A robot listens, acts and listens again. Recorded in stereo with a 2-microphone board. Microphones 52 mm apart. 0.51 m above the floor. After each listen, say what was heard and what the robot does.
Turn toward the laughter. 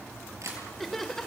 Turn 30° left.
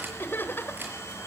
So it is at 135° left. Turn 135° left.
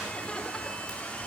Keep listening.
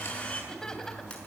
Keep listening.
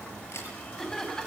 The laughter is now 10° left. Turn 10° left.
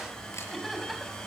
Keep listening.
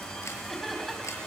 Keep listening.
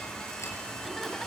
Facing where the laughter came from. I can't hear it now.